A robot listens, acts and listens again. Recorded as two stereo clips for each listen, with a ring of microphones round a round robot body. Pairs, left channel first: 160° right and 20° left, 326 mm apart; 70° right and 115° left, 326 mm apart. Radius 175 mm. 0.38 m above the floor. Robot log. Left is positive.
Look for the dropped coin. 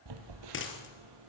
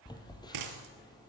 note: The dropped coin: 145° left.
cmd yaw +145
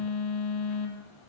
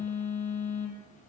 end: I heard a dropped coin from this way, but can't make it out now.